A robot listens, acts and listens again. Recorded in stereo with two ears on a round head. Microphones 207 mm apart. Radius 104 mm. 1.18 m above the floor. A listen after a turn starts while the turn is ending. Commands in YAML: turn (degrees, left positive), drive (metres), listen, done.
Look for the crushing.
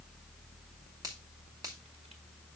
listen: true
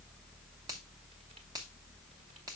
listen: true
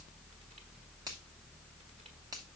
done: "I can't make out crushing to turn to."